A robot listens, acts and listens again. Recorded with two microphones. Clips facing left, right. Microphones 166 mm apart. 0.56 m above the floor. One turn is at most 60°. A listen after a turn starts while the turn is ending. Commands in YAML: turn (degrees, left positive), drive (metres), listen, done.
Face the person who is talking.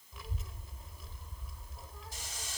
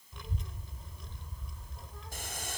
turn: 30
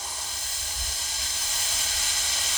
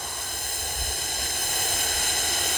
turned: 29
turn: 60
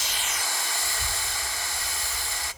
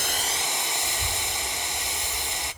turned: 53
turn: 60
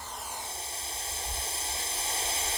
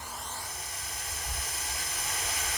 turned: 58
turn: 35
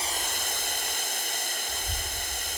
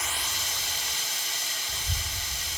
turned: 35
done: "Facing the child speaking, 1 to 2 m away."